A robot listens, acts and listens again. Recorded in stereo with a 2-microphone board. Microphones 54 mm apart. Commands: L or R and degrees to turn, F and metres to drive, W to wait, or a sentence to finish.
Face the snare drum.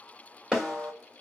R30
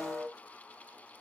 L20
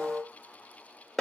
Found it: a snare drum, straight ahead.